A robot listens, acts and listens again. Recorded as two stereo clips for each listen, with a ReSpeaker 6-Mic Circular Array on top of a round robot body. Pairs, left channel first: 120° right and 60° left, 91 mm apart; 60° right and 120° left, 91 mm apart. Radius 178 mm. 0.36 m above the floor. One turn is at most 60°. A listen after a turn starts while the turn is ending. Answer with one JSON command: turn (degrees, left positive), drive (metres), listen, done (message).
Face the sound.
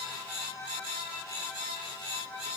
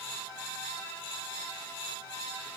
{"listen": true}
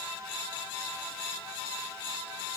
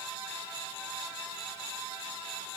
{"listen": true}
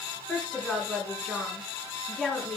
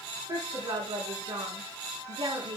{"turn": 60}
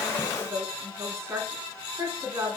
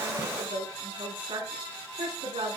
{"turn": 60}
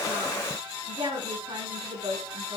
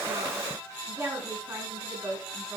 {"turn": 55}
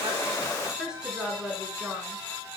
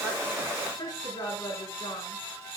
{"turn": -20}
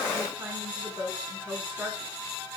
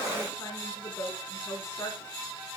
{"done": "Found it: a woman speaking, straight ahead."}